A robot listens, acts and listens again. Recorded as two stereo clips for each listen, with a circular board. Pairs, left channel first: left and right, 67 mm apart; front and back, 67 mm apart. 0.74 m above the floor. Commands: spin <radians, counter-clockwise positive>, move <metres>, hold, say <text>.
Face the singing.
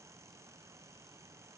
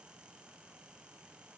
hold
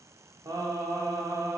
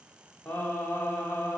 spin -1.05
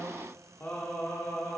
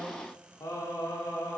spin 0.70
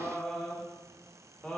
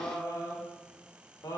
spin 0.26
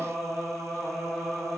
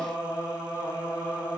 say Found it: singing, straight ahead.